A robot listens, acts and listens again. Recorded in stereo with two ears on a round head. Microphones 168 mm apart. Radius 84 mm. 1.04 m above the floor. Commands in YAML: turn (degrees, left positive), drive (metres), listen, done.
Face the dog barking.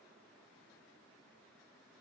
listen: true
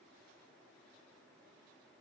listen: true
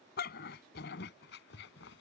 turn: 70
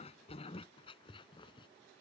turn: 25
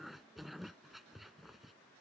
done: "Facing the dog barking."